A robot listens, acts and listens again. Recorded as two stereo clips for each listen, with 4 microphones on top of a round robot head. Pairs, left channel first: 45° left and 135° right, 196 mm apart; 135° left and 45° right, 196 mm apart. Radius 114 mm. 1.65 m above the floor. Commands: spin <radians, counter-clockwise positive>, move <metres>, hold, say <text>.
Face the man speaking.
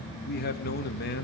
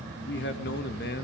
spin 1.57
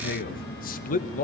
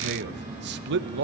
spin -0.17
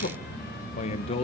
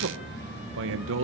spin -0.35
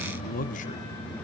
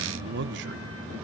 say Found it: a man speaking, straight ahead.